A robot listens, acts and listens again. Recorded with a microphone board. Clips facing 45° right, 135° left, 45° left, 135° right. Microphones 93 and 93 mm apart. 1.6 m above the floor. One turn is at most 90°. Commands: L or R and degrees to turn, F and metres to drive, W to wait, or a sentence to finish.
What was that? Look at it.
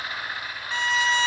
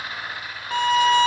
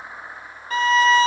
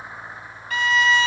L90
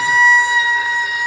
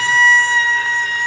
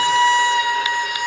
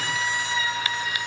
L35
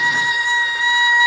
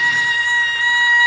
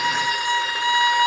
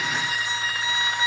L25
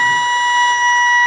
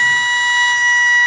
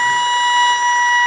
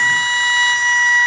Facing the violin, 1 to 2 m away.